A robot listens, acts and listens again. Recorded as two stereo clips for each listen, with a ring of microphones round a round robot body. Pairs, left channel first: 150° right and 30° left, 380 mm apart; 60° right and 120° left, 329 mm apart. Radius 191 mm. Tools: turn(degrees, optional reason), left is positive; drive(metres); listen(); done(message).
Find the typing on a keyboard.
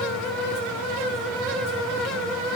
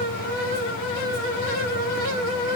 listen()
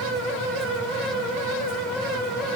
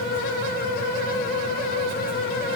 listen()
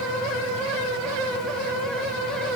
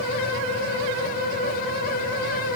done("I can't make out typing on a keyboard to turn to.")